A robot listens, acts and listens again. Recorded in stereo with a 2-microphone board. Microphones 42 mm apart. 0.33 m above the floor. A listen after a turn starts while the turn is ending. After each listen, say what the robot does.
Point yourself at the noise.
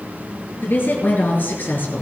Turn 55° left.
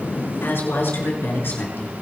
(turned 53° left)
Turn 60° left.
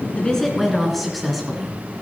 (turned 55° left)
Found it: a woman speaking, straight ahead, 2 to 4 m away.